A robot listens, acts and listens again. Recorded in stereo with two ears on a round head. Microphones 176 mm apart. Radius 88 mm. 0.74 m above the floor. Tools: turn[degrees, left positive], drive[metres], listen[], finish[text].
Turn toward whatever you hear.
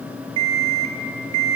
Action: turn[-90]
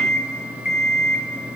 Action: finish[Facing the alarm clock, 1 to 2 m away.]